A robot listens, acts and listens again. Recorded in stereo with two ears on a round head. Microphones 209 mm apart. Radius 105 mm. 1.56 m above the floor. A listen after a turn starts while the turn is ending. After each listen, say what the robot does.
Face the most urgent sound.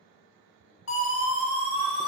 Turn 60° left.
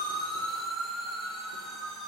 Facing the siren, over 4 m away.